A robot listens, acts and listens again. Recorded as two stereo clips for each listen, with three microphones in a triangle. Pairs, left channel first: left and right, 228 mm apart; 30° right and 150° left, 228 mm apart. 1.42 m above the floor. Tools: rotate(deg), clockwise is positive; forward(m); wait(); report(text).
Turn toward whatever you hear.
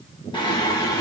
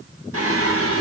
rotate(-165)
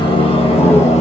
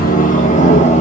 rotate(-30)
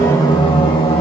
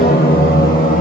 rotate(-25)
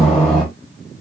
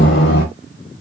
report("Found it: singing, straight ahead.")